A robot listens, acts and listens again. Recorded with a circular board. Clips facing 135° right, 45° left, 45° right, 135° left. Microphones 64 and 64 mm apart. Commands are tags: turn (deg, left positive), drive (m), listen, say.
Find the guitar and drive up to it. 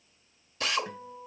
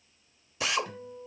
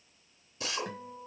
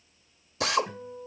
<turn deg="-70"/>
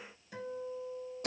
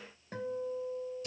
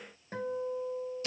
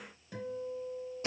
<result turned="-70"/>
<drive m="1.0"/>
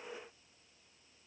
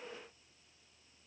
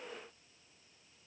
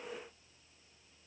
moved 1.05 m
<listen/>
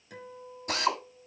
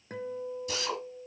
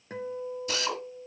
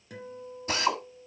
<drive m="1.0"/>
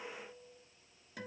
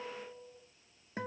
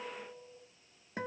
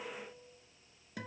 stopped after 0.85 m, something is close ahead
<say>I am next to the guitar.</say>